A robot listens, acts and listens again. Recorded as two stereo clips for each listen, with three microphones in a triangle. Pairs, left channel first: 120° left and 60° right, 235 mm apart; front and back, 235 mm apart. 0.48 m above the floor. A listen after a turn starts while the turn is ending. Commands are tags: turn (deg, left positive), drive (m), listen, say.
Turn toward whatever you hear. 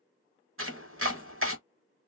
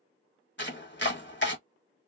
<turn deg="-35"/>
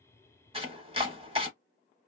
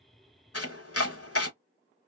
<say>Facing the chopping, 1 to 2 m away.</say>